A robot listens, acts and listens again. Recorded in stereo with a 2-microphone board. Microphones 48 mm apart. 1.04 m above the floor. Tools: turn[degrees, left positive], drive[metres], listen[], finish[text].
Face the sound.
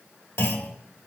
Thought: The clunk: about 70° left or 110° left.
Action: turn[70]
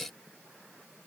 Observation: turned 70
Action: listen[]
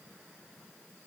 Action: finish[I heard a clunk, but can't make it out now. It was about straight ahead or 40° left.]